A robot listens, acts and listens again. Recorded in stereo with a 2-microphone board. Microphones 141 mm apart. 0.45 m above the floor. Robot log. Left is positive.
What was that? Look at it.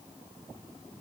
cmd idle
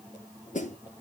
note: The snare drum: about 60° left or 120° left.
cmd yaw +60
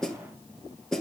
end: Found it: a snare drum, straight ahead, 1 to 2 m away.